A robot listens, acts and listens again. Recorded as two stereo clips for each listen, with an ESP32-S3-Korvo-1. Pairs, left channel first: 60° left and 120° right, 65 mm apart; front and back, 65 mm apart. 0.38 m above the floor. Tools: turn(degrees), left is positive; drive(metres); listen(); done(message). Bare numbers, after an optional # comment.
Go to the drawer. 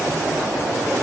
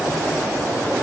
listen()
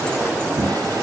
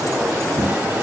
# The drawer: 120° right.
turn(-120)
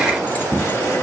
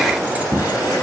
# The drawer is now 15° left.
turn(15)
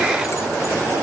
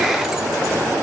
listen()
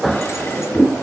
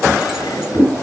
drive(1.0)
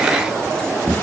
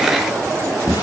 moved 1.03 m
drive(1.0)
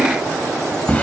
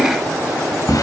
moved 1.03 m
# The drawer is now 10° right.
turn(-10)
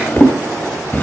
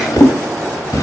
drive(1.0)
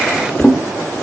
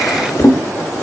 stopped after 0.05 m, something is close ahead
done("Arrived at the drawer, straight ahead.")